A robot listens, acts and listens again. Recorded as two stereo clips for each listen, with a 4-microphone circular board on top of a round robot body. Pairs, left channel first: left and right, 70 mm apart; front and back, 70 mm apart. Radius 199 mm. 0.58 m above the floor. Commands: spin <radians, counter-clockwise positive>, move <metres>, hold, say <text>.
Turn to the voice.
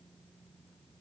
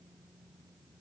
hold
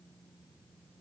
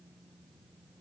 hold
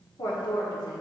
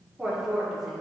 spin 1.57
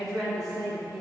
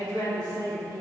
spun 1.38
say Found it: a woman speaking, straight ahead, 2 to 4 m away.